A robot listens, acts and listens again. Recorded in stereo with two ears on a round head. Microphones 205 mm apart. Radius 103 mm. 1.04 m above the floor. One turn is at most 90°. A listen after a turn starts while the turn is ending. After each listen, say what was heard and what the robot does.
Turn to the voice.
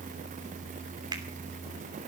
Keep listening.
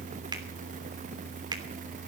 Keep listening.
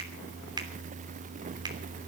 I can't make out anyone speaking to turn to.